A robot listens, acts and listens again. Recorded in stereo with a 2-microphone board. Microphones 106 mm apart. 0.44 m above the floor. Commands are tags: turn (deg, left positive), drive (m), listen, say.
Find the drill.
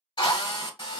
<turn deg="45"/>
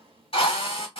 <turn deg="80"/>
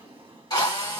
<turn deg="45"/>
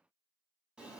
<listen/>
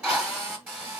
<turn deg="-15"/>
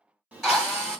<say>Facing the drill.</say>